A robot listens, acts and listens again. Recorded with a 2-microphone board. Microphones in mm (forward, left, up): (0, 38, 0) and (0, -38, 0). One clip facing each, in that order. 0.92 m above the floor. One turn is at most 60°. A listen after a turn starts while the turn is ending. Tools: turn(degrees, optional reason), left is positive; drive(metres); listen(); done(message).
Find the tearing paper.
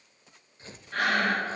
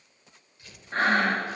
turn(degrees=30, reason="The tearing paper: about 30° left or 150° left.")
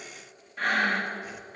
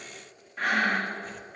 listen()
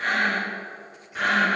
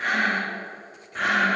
listen()
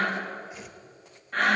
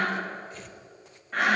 done("Facing the tearing paper, 1 to 2 m away.")